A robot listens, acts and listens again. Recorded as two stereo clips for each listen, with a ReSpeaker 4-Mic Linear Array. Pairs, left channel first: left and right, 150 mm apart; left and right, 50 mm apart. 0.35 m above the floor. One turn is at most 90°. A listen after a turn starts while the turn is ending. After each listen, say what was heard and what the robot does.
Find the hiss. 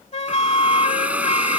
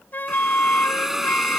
Turn 30° right.
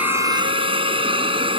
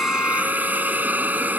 So it is at 140° right. Turn 90° right.
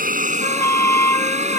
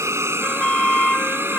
The hiss is now 55° right. Turn 55° right.
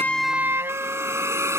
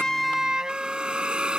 The hiss is now 20° right. Turn 20° right.
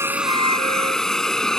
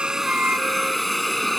Found it: a hiss, straight ahead.